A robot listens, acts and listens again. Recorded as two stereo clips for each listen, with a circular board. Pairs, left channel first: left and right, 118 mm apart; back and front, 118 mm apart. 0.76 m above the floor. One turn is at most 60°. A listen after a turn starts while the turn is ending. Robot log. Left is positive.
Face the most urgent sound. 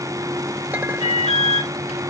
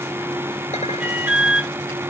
note: The alarm: 75° left.
cmd yaw +60
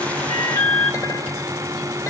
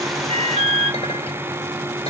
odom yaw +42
note: The alarm is now 35° left.
cmd yaw +35
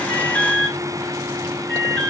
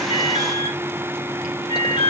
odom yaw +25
note: The alarm is now 10° left.
cmd yaw +10
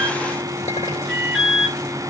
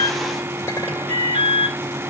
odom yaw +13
end: Facing the alarm.